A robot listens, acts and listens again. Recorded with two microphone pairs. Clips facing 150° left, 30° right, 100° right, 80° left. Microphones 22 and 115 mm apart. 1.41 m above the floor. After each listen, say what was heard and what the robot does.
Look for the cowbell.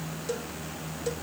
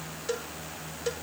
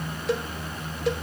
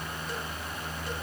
The cowbell: 100° right. Turn 100° right.
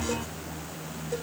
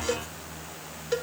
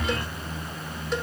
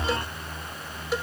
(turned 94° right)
Facing the cowbell.